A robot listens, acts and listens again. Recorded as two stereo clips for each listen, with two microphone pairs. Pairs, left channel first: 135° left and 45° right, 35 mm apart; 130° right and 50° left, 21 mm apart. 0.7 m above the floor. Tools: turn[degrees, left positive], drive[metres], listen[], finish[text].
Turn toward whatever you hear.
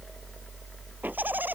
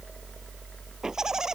Thought: The laughter: 15° right.
Action: turn[-15]
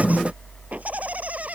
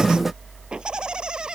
Action: finish[Facing the laughter.]